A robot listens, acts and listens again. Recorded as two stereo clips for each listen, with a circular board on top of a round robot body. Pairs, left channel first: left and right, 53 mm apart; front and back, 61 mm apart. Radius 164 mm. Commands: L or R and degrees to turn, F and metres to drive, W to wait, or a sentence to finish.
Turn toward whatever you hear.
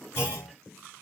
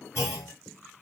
L50
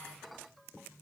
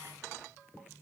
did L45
I heard a clunk from this way, but can't make it out now.